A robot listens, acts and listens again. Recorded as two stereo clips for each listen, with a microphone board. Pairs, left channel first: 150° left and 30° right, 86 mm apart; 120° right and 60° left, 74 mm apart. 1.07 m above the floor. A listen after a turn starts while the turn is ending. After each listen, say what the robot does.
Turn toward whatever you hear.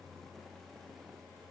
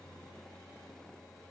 Keep listening.
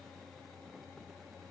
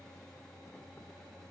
Keep listening.
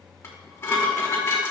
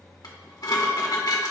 Turn 150° right.
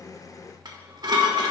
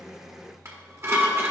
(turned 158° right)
Found it: dishes clattering, straight ahead, 1 to 2 m away.